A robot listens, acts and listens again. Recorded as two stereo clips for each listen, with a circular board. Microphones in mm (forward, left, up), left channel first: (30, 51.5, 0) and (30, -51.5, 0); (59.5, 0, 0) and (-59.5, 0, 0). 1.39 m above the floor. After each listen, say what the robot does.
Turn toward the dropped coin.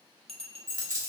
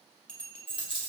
Turn 40° right.
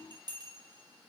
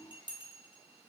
Facing where the dropped coin came from. I can't hear it now.